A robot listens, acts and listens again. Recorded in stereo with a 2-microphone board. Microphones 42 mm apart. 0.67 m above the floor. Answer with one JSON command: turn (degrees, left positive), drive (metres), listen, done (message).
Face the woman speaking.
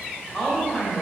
{"turn": 30}
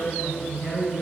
{"turn": 150}
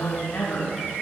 {"turn": 40}
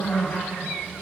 {"turn": 15}
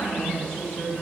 {"done": "Found it: a woman speaking, straight ahead."}